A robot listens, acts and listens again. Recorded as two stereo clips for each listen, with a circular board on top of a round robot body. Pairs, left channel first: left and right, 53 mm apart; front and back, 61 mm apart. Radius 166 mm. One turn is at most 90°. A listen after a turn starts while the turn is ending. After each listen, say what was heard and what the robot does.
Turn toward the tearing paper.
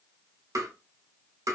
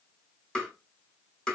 Keep listening.
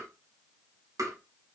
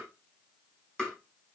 Keep listening.
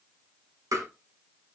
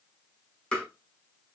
I can't make out tearing paper, only tapping.